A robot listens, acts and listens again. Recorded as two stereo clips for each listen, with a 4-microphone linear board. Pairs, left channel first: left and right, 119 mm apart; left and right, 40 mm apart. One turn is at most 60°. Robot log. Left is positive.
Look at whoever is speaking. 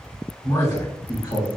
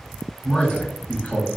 note: The man speaking: about 35° left or 145° left.
cmd yaw +35
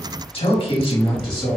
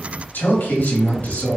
note: The man speaking: about 35° left or 145° left.
cmd yaw +35
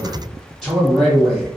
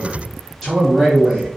note: So it is at 10° right.
cmd yaw -10
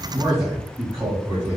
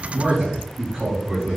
note: The man speaking is now 25° right.
cmd yaw -25
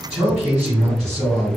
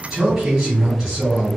note: The man speaking is now 10° right.
cmd yaw -10
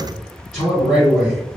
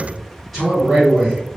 end: Found it: a man speaking, straight ahead.